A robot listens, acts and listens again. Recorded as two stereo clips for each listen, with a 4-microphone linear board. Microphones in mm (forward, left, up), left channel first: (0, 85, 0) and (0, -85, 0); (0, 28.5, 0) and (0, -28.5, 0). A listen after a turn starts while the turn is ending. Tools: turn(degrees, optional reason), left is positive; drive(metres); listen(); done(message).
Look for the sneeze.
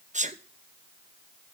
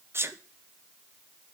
turn(degrees=-45, reason="The sneeze: about 45° right or 135° right.")
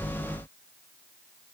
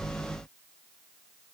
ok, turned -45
listen()
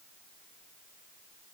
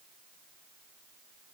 done("I heard a sneeze, but can't make it out now. It was about straight ahead or 90° right.")